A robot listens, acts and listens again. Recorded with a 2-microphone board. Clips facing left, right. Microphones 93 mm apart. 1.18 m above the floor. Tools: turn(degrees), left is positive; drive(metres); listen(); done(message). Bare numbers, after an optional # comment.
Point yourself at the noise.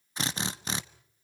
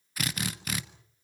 # The drill: about 25° left or 155° left.
turn(25)
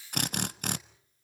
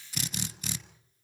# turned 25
# So it is at 125° left.
turn(125)
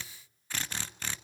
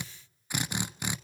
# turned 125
# The drill is now 15° right.
turn(-15)
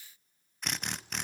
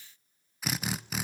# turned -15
done("Facing the drill, 1 to 2 m away.")